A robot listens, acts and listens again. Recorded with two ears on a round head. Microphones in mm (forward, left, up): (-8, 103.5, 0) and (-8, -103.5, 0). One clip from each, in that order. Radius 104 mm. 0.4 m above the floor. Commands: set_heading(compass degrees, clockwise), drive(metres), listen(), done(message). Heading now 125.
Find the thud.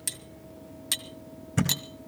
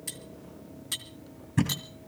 set_heading(90)
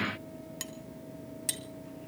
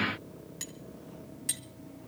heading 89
listen()
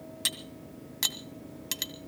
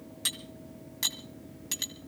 done("I heard a thud, but can't make it out now. It was about straight ahead or 110° left.")